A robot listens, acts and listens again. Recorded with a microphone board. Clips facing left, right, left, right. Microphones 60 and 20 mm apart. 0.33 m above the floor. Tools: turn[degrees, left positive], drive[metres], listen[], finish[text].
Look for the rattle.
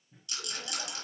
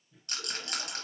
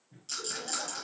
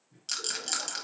Thought: The rattle: about 50° right or 130° right.
Action: turn[-50]
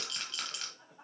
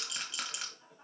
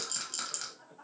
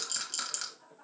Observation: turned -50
Thought: So it is at 10° right.
Action: turn[-10]
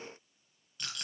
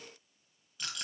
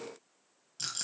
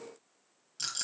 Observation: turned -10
Action: finish[Found it: a rattle, straight ahead.]